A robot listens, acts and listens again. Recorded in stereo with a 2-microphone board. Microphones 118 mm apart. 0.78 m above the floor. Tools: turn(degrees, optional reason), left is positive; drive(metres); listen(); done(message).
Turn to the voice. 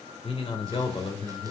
turn(degrees=50, reason="The man speaking: about 50° left or 130° left.")
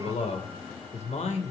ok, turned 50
turn(degrees=75, reason="So it is at 75° left.")
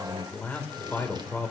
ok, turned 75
turn(degrees=15, reason="The man speaking is now 15° left.")
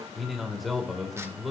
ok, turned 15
done("Facing the man speaking, 2 to 4 m away.")